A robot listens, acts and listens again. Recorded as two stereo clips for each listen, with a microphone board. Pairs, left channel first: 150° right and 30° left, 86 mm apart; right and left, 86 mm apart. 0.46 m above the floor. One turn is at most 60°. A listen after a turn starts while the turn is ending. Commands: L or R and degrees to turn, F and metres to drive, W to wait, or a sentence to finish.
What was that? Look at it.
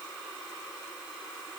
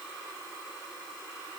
W
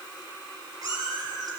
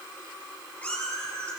R15
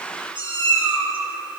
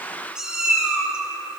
L10
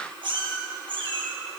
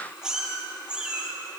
L10
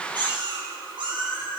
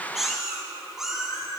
Facing the cat meowing.